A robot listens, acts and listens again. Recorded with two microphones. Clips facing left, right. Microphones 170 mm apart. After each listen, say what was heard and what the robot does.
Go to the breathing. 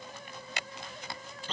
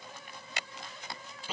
Keep listening.
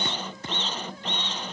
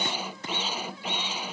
Keep listening.
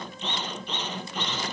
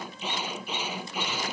I can't make out breathing to turn to.